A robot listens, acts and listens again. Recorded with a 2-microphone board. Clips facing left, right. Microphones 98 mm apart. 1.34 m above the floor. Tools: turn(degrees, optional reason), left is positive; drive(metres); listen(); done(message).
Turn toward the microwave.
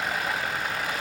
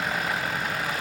listen()
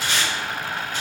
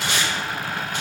listen()
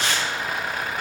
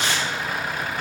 done("I can't make out a microwave, only tape being pulled.")